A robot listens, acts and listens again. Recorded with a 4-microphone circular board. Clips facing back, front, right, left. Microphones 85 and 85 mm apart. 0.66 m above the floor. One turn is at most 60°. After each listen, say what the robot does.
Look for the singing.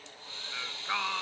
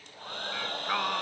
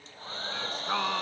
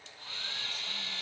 Turn 60° right.
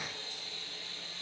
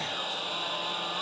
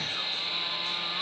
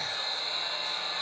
Turn 20° right.
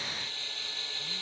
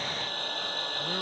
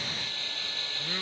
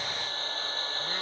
Keep listening.
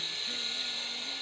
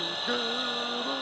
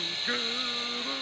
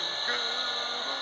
I heard singing from this way, but can't make it out now.